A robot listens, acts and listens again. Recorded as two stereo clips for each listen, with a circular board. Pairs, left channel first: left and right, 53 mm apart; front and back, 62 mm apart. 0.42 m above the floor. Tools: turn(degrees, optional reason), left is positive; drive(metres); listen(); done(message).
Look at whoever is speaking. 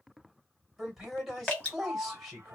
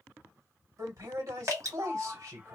turn(degrees=-170, reason="The man speaking: 170° right.")
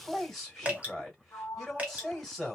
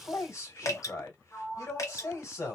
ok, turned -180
done("Facing the man speaking.")